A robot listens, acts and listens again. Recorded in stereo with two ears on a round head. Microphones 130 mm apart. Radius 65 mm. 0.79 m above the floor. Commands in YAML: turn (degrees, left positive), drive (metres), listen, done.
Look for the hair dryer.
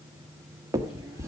listen: true
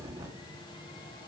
listen: true
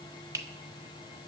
done: "I can't make out a hair dryer to turn to."